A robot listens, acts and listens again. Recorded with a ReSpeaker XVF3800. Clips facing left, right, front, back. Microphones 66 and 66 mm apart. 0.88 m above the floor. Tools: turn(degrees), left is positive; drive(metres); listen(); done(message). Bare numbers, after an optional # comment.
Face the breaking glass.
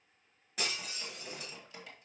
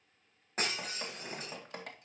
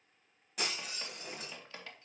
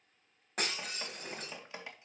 # The breaking glass: 135° right.
turn(-135)
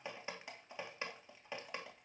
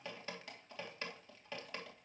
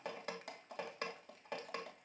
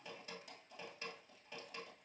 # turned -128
# Nothing new. It was at 10° right.
turn(-10)
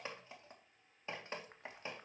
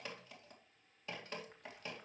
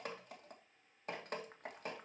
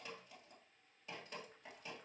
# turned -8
done("I heard breaking glass from this way, but can't make it out now.")